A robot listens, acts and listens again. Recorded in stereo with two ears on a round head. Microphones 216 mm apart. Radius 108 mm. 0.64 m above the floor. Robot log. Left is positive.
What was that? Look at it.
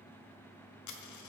cmd yaw +90
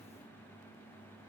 end: Facing where the dropped coin came from. I can't hear it now.